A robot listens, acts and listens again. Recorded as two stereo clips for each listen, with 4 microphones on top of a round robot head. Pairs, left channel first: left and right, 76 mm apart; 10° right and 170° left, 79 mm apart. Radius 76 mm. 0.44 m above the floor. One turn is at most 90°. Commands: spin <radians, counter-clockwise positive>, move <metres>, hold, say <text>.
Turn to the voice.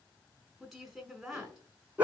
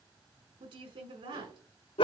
spin 1.57
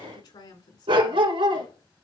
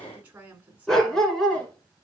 spin 1.57
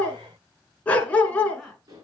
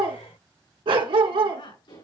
say Found it: a woman speaking, straight ahead.